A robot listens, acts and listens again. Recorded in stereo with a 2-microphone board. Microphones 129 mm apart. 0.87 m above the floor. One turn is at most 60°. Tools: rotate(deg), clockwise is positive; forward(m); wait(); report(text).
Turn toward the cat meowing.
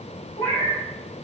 rotate(-60)
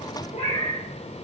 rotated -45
rotate(-60)
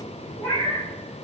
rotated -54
rotate(-25)
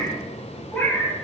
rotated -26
report("Facing the cat meowing.")